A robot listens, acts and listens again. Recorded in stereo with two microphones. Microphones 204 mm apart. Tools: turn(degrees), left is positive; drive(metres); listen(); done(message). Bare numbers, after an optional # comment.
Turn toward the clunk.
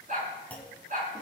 turn(30)
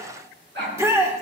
listen()
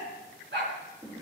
done("I heard a clunk, but can't make it out now. It was about 20° right or 140° left.")